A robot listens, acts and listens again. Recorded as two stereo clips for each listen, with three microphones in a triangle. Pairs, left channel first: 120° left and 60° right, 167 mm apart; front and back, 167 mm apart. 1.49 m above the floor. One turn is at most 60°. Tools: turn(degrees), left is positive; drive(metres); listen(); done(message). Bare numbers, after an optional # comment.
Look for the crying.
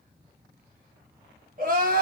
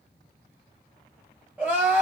# The crying: 100° right.
turn(-60)
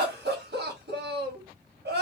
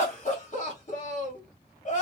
# The crying is now 50° right.
turn(-50)
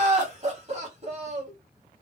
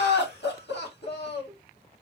# The crying is now 10° right.
turn(-10)
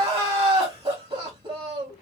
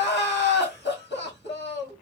done("Facing the crying.")